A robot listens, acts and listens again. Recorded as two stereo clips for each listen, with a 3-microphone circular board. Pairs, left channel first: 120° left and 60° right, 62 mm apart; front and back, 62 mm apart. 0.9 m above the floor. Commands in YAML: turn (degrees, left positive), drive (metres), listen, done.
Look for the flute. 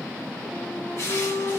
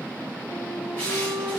turn: 165
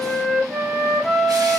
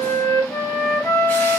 turn: 30
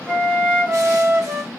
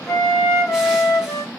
done: "Facing the flute."